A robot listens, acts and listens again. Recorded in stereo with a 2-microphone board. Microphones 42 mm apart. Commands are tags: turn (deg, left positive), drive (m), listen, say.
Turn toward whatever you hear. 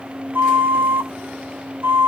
<turn deg="-60"/>
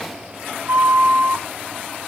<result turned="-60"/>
<turn deg="-65"/>
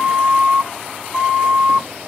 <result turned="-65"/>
<turn deg="-20"/>
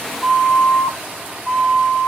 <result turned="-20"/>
<say>Found it: a flute, straight ahead, 1 to 2 m away.</say>